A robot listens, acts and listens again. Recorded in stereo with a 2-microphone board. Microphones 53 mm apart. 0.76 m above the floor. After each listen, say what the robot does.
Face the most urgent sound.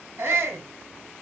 Turn 60° right.
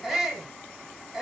Facing the shout, 2 to 4 m away.